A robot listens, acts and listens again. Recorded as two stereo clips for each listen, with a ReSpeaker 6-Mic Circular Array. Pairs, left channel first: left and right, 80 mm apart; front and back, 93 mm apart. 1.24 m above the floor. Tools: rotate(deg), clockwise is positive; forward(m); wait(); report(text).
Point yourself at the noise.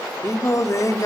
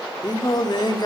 rotate(-40)
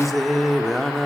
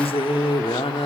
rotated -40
report("Facing the singing, 2 to 4 m away.")